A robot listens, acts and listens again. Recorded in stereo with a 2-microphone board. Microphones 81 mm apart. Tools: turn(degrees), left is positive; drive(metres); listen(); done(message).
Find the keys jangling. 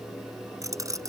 turn(degrees=-45)
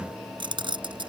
turn(degrees=-95)
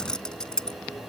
turn(degrees=10)
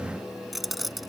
done("Facing the keys jangling.")